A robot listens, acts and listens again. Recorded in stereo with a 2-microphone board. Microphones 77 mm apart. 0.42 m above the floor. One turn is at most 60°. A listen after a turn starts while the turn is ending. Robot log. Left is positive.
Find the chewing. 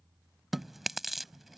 cmd yaw +30
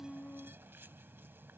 cmd idle
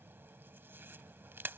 note: So it is at 30° right.
cmd yaw -30
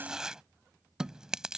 note: The chewing is now 10° right.
cmd yaw -10
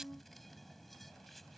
cmd idle
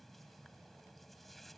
cmd idle
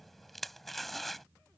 end: Found it: chewing, straight ahead.